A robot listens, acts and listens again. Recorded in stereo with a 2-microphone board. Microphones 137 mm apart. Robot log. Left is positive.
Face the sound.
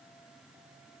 cmd idle
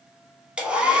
cmd yaw -30
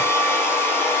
note: So it is at 20° left.
cmd yaw +20
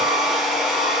end: Found it: a hair dryer, straight ahead, under 1 m away.